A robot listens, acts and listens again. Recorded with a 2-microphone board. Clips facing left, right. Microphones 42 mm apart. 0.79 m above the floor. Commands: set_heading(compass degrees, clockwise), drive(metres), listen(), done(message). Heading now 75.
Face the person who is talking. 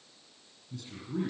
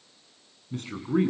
set_heading(130)
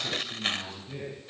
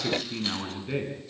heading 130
set_heading(195)
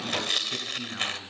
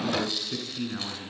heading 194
done("Facing the man speaking, over 4 m away.")